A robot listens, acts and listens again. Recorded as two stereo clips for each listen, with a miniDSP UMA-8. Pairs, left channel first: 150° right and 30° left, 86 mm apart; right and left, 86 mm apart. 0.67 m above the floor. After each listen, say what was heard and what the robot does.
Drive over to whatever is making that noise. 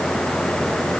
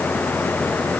Keep listening.
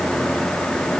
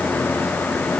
Keep listening.
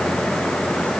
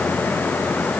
I can't make out anything to turn to.